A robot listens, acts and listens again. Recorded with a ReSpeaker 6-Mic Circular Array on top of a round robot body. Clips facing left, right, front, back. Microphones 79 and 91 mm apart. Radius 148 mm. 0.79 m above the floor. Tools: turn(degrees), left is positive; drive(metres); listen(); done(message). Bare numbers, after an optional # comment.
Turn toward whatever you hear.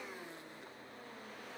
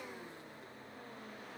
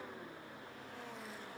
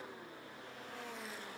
listen()
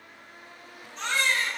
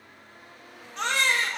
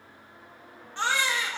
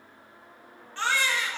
# The baby crying: 70° right.
turn(-70)
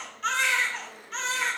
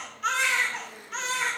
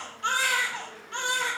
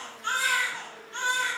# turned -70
done("Facing the baby crying.")